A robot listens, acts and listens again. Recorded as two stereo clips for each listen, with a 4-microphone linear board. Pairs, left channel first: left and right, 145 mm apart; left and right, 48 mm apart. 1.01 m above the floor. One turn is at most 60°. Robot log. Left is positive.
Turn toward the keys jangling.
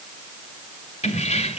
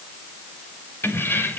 note: The keys jangling: about 45° left or 135° left.
cmd yaw +45
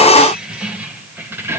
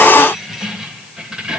note: So it is at 15° right.
cmd yaw -15
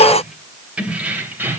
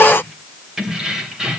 note: The keys jangling is now 15° right.
cmd yaw -15
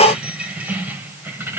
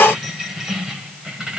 note: The keys jangling is now 15° right.
cmd yaw -15
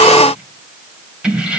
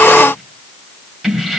end: Found it: keys jangling, straight ahead, 2 to 4 m away.